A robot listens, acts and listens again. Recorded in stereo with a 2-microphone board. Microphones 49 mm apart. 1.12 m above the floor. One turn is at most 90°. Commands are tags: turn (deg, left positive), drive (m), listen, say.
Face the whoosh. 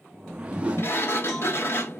<turn deg="-20"/>
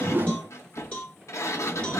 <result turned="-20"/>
<turn deg="-90"/>
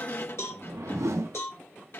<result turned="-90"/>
<turn deg="-80"/>
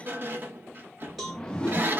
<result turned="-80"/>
<turn deg="15"/>
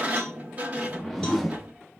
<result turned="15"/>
<say>Facing the whoosh.</say>